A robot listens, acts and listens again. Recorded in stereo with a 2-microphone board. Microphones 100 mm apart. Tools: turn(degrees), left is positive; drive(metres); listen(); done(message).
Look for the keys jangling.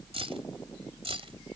turn(degrees=-75)
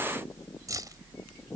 turn(degrees=-40)
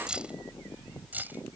turn(degrees=-20)
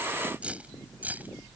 turn(degrees=-15)
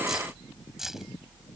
done("Facing the keys jangling.")